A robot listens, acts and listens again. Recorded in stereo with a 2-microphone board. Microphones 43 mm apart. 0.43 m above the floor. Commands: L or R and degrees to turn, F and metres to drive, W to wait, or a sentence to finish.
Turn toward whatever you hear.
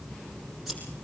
R30
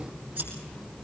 R145
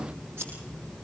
R60
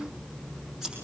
R10
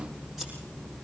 W
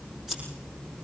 Facing the scissors.